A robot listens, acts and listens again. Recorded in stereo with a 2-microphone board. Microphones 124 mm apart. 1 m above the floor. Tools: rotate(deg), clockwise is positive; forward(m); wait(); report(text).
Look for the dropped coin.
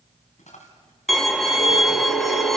rotate(-70)
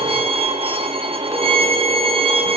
wait()
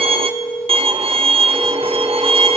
report("I heard a dropped coin, but can't make it out now. It was about straight ahead or 40° left.")